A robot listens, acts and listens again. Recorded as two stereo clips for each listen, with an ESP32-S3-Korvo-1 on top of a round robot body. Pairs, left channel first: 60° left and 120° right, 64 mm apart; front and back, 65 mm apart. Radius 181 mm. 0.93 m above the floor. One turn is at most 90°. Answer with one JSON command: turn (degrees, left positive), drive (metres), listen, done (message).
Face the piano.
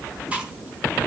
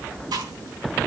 {"listen": true}
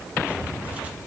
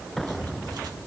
{"listen": true}
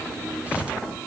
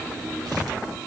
{"done": "I can't make out a piano to turn to."}